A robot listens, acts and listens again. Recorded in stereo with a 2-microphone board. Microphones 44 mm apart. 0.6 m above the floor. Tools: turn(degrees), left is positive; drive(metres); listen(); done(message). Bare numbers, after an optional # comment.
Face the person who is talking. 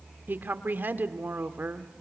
# The woman speaking: about 50° right or 130° right.
turn(-50)
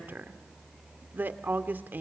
# So it is at 65° right.
turn(-65)
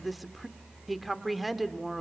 done("Facing the woman speaking, 1 to 2 m away.")